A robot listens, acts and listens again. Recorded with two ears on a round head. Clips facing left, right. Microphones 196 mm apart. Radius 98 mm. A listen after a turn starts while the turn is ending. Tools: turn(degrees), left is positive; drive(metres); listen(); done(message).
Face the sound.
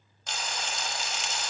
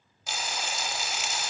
turn(degrees=-30)
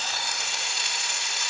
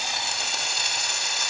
turn(degrees=-140)
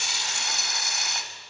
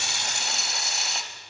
turn(degrees=-25)
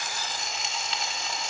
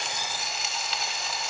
done("Facing the frying, 1 to 2 m away.")